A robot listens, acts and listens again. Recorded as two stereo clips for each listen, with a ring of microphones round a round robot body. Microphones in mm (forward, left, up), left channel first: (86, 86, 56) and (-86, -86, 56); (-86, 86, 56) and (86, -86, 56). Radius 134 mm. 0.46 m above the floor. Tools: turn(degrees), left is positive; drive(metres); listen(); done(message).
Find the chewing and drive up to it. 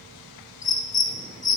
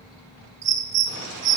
listen()
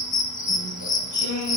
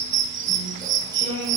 turn(degrees=55)
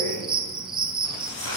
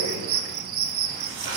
drive(metres=1.0)
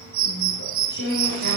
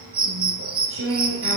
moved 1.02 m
drive(metres=1.0)
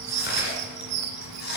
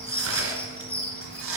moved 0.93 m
turn(degrees=-10)
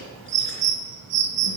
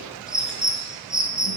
listen()
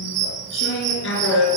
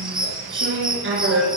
drive(metres=1.0)
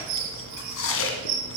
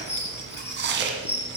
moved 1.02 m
drive(metres=1.0)
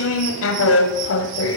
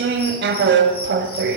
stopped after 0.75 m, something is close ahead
done("I am next to the chewing.")